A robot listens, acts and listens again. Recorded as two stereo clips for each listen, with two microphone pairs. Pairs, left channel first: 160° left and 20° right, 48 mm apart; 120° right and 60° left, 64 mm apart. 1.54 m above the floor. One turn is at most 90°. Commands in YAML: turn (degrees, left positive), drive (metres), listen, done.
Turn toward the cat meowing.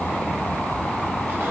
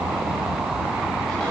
listen: true
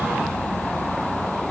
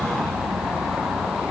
listen: true
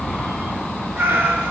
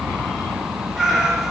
turn: -20
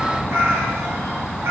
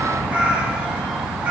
done: "Found it: a cat meowing, straight ahead."